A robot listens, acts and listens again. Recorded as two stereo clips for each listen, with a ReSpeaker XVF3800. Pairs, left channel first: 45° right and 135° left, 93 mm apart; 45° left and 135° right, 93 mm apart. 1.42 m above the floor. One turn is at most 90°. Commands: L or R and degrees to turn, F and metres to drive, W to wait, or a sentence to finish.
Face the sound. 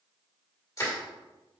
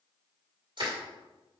R90
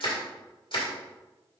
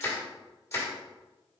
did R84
R20
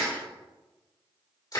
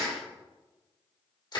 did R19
Facing the crushing, 1 to 2 m away.